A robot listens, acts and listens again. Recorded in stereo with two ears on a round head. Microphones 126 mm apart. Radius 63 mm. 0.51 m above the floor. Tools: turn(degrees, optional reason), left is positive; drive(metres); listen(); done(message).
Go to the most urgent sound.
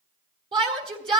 turn(degrees=-35, reason="The shout: about 35° right or 145° right.")
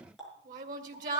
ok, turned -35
turn(degrees=-105, reason="So it is at 105° right.")
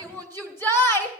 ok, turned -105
turn(degrees=15, reason="The shout is now 15° left.")
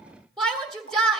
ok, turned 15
drive(metres=1.0)
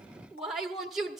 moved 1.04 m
drive(metres=1.0)
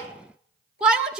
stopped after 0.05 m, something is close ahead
turn(degrees=-10, reason="The shout is now 10° right.")
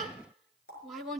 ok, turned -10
done("I am next to the shout.")